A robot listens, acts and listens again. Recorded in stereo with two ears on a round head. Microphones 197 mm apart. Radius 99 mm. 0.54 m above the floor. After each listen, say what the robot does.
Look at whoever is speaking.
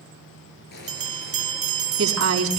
Turn 90° right.
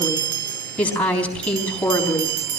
Found it: a woman speaking, straight ahead, 2 to 4 m away.